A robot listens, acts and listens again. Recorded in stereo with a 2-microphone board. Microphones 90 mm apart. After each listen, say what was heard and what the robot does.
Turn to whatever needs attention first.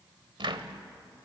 Keep listening.
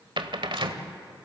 Keep listening.
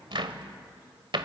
I can't make out anything urgent to turn to.